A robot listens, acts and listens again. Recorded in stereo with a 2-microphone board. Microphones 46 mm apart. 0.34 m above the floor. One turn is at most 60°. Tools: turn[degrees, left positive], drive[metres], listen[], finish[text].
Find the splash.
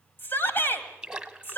Thought: The splash: about 15° right or 165° right.
Action: turn[-15]
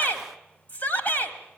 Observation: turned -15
Action: listen[]
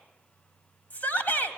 Action: finish[I heard a splash, but can't make it out now. It was about straight ahead or 150° right.]